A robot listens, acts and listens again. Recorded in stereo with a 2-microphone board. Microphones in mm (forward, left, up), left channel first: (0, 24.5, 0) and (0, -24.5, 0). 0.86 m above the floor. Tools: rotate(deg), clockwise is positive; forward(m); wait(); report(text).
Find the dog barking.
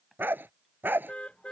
rotate(40)
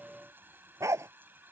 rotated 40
rotate(100)
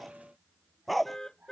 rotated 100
report("Facing the dog barking.")